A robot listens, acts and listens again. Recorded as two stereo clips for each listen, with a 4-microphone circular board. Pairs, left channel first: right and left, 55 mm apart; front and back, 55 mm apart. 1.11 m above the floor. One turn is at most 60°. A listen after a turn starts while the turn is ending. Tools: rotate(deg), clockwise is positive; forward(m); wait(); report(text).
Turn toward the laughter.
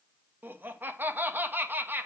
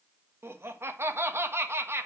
rotate(-60)
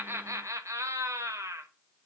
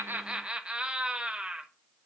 rotate(-60)
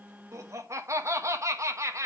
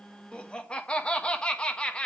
rotate(-60)
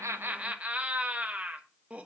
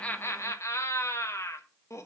rotate(-25)
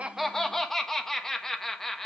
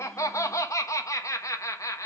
rotate(10)
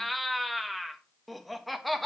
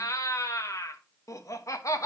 report("Facing the laughter, 1 to 2 m away.")